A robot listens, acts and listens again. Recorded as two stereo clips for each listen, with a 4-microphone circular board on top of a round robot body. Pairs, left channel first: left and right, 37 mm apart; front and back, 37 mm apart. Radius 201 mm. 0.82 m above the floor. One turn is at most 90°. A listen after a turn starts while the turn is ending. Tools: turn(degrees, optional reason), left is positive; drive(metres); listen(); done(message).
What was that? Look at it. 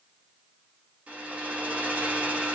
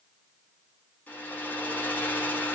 turn(degrees=-40, reason="The hair dryer: 40° right.")
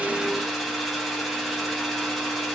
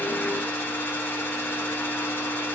done("Found it: a hair dryer, straight ahead.")